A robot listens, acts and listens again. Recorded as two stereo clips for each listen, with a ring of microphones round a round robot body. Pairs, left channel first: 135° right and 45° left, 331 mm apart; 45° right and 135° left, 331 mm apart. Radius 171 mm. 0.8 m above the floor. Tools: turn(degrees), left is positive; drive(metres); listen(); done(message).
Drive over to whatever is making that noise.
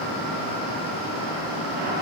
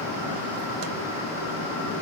listen()
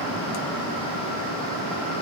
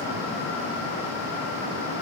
listen()
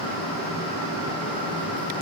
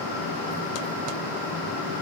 done("I can't make out anything to turn to.")